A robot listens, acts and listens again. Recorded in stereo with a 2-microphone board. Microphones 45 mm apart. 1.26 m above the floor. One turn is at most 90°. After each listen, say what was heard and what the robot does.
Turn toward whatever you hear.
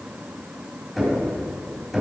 Turn 30° left.
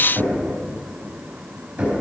So it is at 25° right. Turn 25° right.
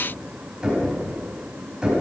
The knocking is now 15° right. Turn 15° right.
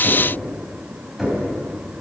Found it: knocking, straight ahead.